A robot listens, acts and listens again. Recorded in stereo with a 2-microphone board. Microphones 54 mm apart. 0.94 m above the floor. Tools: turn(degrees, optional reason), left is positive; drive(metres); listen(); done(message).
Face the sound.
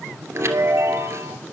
turn(degrees=-60, reason="The chime: about 60° right or 120° right.")
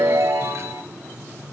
turn(degrees=-60, reason="So it is at 60° right.")
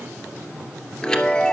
turn(degrees=15, reason="The chime is now 15° left.")
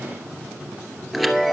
done("Facing the chime, 2 to 4 m away.")